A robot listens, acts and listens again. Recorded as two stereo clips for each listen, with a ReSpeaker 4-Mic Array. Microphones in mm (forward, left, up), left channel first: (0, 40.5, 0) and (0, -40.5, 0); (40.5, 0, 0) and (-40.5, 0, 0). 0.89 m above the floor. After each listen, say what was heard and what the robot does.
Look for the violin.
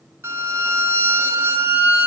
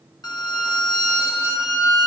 The violin: 30° right. Turn 30° right.
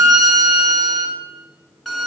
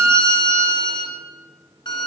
Facing the violin, 2 to 4 m away.